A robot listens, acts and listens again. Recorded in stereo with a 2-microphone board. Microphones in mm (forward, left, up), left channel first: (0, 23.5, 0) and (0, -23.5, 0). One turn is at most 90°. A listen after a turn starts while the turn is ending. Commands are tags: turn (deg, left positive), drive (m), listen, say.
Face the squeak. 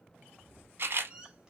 <turn deg="-20"/>
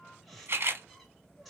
<say>Facing the squeak, 1 to 2 m away.</say>